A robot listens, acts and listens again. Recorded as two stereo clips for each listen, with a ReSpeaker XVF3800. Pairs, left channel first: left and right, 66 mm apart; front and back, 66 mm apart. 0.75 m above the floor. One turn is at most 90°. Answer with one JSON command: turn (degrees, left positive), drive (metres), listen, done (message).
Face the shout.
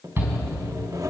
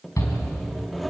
{"turn": -35}
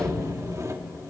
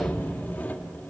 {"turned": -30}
{"listen": true}
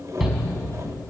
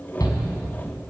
{"done": "Facing the shout, over 4 m away."}